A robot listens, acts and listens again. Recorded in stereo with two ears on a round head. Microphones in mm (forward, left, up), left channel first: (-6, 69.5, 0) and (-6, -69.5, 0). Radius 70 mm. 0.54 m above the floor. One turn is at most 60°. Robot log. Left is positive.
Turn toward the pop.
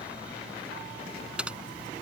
cmd idle
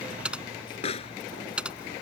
note: The pop: about 40° left or 140° left.
cmd yaw +40
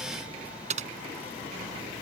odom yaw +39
cmd idle
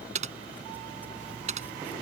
end: I heard a pop, but can't make it out now. It was about straight ahead or 100° left.